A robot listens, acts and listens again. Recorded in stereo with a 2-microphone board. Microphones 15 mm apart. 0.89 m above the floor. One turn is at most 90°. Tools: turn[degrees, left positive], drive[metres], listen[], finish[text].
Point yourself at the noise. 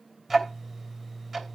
Action: turn[-30]
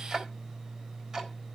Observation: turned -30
Thought: So it is at 145° right.
Action: turn[-90]
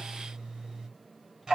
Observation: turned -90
Thought: The ticking is now 60° right.
Action: turn[-60]
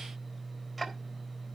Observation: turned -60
Thought: The ticking is now 15° right.
Action: turn[-15]
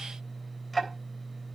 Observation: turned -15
Action: finish[Facing the ticking.]